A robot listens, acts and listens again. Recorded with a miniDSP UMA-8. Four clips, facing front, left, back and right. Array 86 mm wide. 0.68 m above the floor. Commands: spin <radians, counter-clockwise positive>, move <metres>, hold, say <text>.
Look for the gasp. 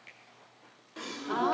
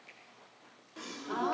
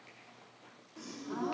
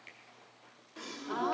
say Found it: a gasp, straight ahead, 1 to 2 m away.